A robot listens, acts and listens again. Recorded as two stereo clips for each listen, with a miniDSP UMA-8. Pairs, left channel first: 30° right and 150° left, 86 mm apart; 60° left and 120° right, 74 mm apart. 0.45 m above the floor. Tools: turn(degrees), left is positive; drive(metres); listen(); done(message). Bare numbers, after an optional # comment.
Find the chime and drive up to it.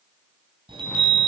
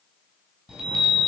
# The chime: 160° left.
turn(160)
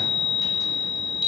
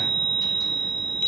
# The chime is now 10° right.
turn(-10)
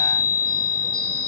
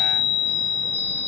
drive(1.0)
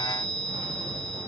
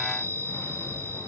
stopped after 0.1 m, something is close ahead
done("Blocked. The chime is further on, straight ahead.")